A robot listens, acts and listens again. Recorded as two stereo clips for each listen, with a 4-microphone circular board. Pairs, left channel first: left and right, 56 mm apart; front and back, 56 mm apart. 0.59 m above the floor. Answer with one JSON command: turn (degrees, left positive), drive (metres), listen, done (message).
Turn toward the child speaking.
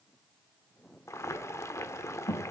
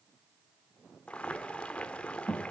{"turn": 95}
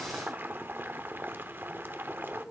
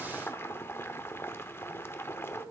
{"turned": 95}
{"turn": -25}
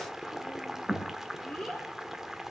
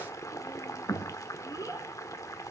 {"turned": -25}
{"done": "Found it: a child speaking, straight ahead."}